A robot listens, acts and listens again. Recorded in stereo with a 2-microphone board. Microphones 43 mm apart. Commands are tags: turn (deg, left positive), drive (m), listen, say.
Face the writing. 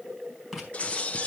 <turn deg="30"/>
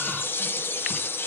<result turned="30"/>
<listen/>
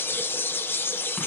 <listen/>
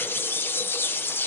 <say>I heard writing, but can't make it out now. It was about 30° right or 150° left.</say>